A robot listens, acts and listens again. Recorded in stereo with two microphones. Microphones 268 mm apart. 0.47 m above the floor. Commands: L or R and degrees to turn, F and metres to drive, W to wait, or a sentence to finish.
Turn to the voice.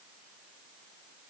W
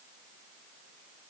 W
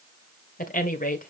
L30
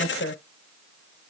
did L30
L115
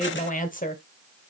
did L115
L35
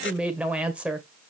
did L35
Facing the woman speaking.